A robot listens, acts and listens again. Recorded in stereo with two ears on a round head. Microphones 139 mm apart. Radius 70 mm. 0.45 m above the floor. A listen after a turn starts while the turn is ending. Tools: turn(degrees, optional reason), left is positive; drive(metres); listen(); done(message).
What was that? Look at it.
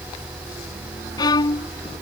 turn(degrees=25, reason="The violin: about 25° left or 155° left.")
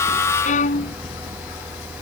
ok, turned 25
turn(degrees=125, reason="So it is at 125° left.")
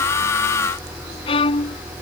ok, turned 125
turn(degrees=35, reason="The violin is now 35° left.")
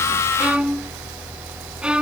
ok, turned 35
done("Facing the violin.")